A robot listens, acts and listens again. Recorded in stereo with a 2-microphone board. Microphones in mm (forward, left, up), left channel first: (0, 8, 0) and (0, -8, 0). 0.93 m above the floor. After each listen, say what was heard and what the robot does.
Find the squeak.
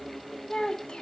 Keep listening.
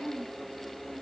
Keep listening.
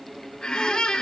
The squeak: about 65° left or 115° left. Turn 65° left.
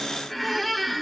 Found it: a squeak, straight ahead, 1 to 2 m away.